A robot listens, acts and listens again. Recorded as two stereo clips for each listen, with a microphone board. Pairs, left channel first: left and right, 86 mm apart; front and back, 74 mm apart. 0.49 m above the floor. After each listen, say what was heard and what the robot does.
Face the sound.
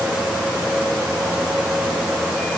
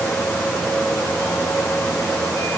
Keep listening.
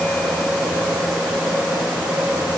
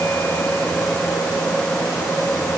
Keep listening.
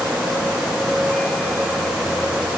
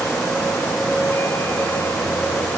I can't make out anything.